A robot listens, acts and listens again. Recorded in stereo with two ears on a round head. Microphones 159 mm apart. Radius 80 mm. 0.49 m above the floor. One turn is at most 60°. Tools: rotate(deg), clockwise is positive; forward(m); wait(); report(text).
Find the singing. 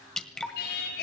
rotate(-60)
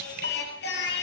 rotate(-60)
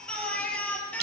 rotate(-10)
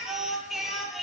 report("Found it: singing, straight ahead, over 4 m away.")